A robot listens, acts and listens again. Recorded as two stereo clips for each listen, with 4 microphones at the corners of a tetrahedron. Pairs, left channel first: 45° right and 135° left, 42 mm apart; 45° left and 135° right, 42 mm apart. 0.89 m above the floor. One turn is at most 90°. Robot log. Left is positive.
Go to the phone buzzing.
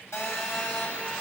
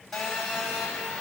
note: The phone buzzing: 35° right.
cmd yaw -35
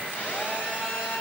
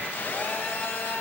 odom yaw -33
cmd fwd 1.0
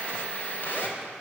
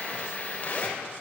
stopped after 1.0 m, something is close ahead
note: The phone buzzing is now 10° right.
cmd yaw -10
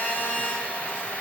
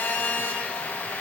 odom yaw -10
end: Something is in my way. I am facing the phone buzzing but have not reached it.